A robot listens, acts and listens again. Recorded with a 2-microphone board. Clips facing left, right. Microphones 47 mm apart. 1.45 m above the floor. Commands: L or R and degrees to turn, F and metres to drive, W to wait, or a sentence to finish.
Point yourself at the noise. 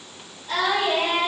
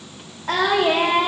R65
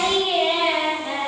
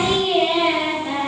Found it: singing, straight ahead, over 4 m away.